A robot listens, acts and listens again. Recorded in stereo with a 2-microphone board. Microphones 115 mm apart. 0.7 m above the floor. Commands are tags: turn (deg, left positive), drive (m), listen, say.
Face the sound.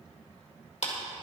<turn deg="75"/>
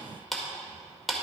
<say>Found it: a clap, straight ahead, 1 to 2 m away.</say>